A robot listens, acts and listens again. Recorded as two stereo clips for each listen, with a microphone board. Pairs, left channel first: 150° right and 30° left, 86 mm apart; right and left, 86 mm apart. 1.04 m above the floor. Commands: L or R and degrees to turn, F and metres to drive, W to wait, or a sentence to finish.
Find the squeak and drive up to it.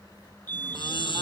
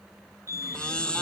R170
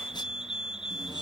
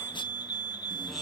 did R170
W
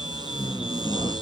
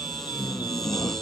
W
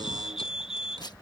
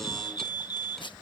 Facing where the squeak came from. I can't hear it now. I did not reach it.